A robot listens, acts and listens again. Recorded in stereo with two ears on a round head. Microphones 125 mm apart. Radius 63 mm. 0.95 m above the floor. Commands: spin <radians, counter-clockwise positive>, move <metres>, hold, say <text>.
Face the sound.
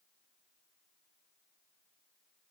hold
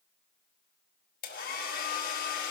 spin 1.31
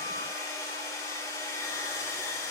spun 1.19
spin 0.35
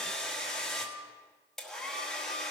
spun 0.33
say Found it: a hair dryer, straight ahead.